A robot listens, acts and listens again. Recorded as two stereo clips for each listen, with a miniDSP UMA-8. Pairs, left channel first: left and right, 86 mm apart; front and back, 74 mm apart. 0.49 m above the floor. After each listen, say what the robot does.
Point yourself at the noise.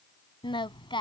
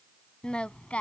Turn 75° left.
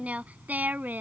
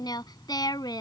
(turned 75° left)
Turn 20° right.
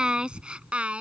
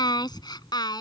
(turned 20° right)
Turn 15° right.
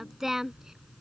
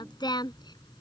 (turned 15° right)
Found it: singing, straight ahead.